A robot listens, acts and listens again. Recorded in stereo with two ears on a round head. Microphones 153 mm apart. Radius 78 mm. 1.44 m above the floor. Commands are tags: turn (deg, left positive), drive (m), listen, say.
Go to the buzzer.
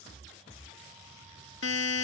<turn deg="90"/>
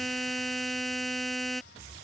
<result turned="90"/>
<drive m="1.0"/>
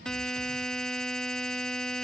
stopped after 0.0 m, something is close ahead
<say>Something is in my way. I am facing the buzzer but have not reached it.</say>